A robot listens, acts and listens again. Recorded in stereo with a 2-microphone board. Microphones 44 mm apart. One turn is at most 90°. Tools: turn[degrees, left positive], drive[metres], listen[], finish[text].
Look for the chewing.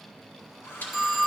Thought: The chewing: about 45° left or 135° left.
Action: turn[45]
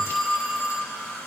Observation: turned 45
Action: listen[]
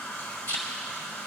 Thought: So it is at 90° left.
Action: turn[90]
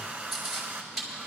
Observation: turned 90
Action: finish[Facing the chewing, 2 to 4 m away.]